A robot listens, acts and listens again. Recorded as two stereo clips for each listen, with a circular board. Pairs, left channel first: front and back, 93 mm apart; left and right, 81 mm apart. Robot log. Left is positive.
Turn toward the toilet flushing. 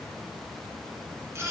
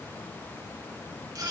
cmd idle
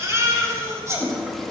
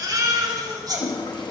note: The toilet flushing: 85° left.
cmd yaw +85
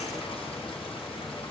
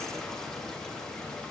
cmd idle
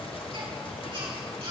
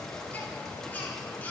cmd idle
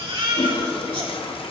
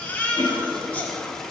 end: Found it: a toilet flushing, straight ahead.